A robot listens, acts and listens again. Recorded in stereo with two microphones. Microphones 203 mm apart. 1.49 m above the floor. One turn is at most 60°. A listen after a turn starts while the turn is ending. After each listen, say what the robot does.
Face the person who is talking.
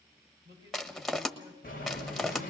Turn 20° right.
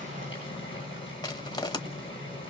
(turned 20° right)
Keep listening.
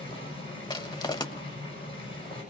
Keep listening.
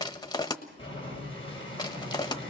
I heard a man speaking, but can't make it out now. It was about straight ahead or 140° right.